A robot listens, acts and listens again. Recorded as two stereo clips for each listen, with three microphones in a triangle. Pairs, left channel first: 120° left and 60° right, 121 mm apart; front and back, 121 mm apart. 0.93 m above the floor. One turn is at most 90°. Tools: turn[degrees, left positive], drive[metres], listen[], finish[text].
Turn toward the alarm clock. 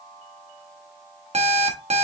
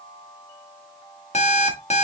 Thought: The alarm clock: 25° right.
Action: turn[-25]
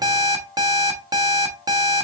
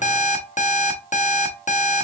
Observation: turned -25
Action: finish[Facing the alarm clock.]